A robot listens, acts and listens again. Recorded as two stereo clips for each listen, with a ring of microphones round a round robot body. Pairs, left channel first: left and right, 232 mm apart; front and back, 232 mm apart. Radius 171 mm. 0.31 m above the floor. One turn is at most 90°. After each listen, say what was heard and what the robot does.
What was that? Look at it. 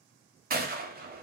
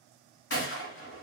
The gunshot: 40° right. Turn 40° right.
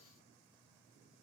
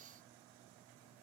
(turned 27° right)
Nothing new. It was at 15° right. Turn 15° right.
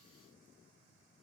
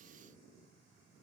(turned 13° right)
I heard a gunshot from this way, but can't make it out now.